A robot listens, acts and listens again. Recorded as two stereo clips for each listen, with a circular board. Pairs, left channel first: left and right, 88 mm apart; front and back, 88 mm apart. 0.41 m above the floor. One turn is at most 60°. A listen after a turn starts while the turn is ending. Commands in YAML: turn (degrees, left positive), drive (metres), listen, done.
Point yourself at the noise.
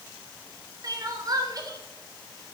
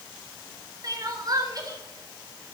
turn: -60
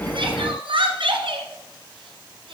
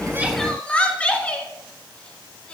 turn: -60
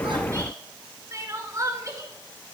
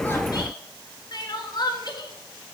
turn: -35
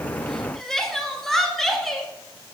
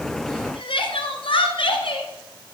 done: "Found it: crying, straight ahead, 1 to 2 m away."